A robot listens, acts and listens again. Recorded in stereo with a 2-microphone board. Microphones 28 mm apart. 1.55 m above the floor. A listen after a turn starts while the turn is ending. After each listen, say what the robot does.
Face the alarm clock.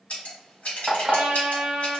Turn 20° right.
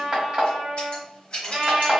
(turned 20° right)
Turn 140° right.
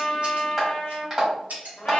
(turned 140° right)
Turn 15° right.
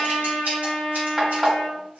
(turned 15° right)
Facing the alarm clock, 1 to 2 m away.